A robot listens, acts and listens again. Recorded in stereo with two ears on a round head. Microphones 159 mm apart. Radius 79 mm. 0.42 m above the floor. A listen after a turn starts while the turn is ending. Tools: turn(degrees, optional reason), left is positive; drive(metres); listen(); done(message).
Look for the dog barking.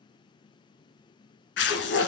turn(degrees=55, reason="The dog barking: about 55° left or 125° left.")
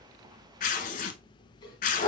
turn(degrees=30, reason="So it is at 30° left.")
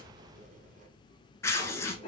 turn(degrees=35, reason="The dog barking is now 35° left.")
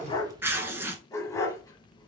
turn(degrees=20, reason="The dog barking is now 20° left.")
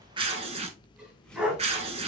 done("Facing the dog barking, 1 to 2 m away.")